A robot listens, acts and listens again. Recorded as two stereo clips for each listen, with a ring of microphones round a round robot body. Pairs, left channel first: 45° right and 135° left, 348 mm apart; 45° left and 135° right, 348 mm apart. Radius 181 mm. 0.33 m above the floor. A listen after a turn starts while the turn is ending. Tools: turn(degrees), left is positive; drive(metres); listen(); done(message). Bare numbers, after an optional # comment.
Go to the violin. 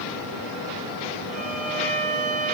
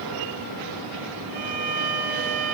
# The violin: 155° right.
turn(-155)
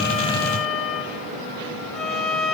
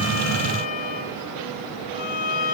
# The violin is now 45° left.
turn(45)
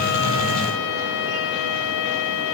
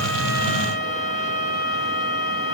# The violin is now 10° right.
turn(-10)
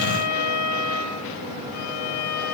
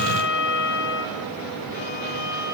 drive(1.0)
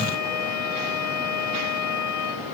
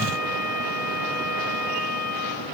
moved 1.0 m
drive(1.0)
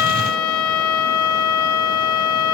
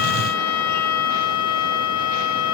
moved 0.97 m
drive(1.0)
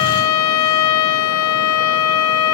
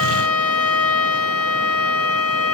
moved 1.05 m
drive(1.0)
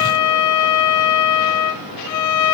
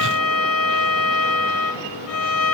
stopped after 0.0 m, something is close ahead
done("I am next to the violin.")